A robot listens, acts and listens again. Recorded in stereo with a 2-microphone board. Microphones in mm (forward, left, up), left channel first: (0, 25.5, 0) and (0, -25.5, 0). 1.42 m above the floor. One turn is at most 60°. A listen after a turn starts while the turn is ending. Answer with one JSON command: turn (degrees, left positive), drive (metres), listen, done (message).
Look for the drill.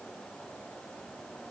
{"listen": true}
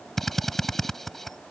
{"turn": 30}
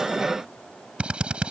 {"turn": -20}
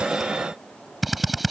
{"done": "Facing the drill."}